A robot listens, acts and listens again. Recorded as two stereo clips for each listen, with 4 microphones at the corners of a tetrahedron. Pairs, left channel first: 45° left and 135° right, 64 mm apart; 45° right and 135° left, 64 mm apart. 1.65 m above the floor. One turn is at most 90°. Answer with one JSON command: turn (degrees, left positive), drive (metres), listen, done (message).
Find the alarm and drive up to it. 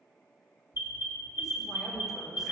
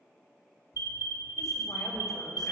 {"turn": 90}
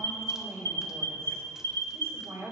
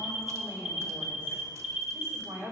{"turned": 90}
{"turn": 60}
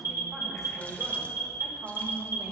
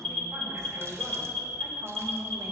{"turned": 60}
{"turn": 20}
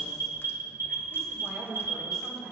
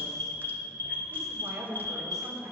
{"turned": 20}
{"drive": 1.0}
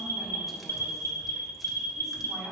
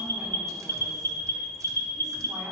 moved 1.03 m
{"drive": 1.0}
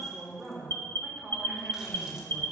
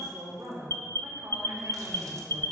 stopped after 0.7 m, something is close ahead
{"done": "Arrived at the alarm, straight ahead."}